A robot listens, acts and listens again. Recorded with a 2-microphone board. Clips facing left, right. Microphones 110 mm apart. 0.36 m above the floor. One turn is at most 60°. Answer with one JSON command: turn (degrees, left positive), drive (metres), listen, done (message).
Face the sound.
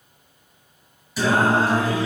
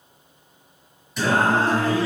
{"turn": 20}
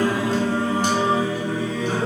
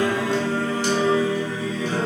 {"turn": 60}
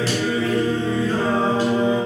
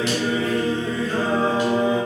{"turn": 30}
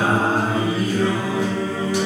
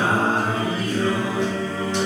{"turn": 10}
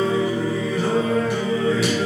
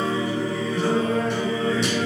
{"done": "Found it: singing, straight ahead, 2 to 4 m away."}